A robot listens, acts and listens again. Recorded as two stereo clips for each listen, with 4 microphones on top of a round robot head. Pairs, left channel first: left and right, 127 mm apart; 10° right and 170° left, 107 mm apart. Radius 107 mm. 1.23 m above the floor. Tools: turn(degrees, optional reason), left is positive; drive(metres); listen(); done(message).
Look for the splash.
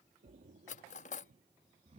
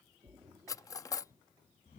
turn(degrees=-120, reason="The splash: 120° right.")
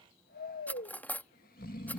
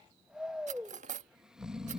done("Facing where the splash came from. I can't hear it now.")